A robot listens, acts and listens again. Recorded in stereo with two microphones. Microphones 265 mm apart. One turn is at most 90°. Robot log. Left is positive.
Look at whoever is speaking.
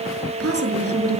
note: The woman speaking: about 60° right or 120° right.
cmd yaw -60
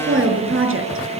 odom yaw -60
note: So it is at 55° right.
cmd yaw -55
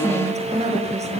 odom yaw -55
note: The woman speaking is now 25° right.
cmd yaw -25
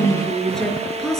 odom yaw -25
end: Found it: a woman speaking, straight ahead, over 4 m away.